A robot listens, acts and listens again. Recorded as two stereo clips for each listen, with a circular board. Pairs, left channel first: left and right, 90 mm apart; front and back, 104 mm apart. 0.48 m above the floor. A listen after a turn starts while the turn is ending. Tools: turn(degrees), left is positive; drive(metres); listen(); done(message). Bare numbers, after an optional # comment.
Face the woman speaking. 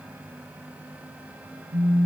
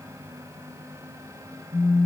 listen()
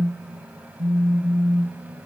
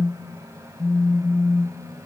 listen()
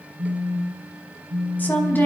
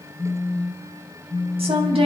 # The woman speaking: 160° left.
turn(160)
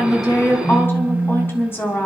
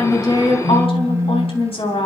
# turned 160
# The woman speaking is now 25° left.
turn(25)
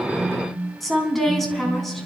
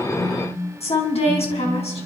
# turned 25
done("Found it: a woman speaking, straight ahead, over 4 m away.")